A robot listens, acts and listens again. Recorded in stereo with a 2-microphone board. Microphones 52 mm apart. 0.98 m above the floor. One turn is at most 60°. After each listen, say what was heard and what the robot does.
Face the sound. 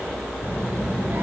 The child speaking: about 30° right or 150° right. Turn 30° right.
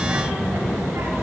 So it is at 120° right. Turn 60° right.
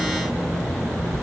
The child speaking is now 80° right. Turn 60° right.
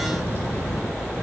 The child speaking is now 50° right. Turn 50° right.
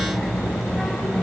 The child speaking is now 10° right. Turn 10° right.
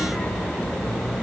Facing the child speaking.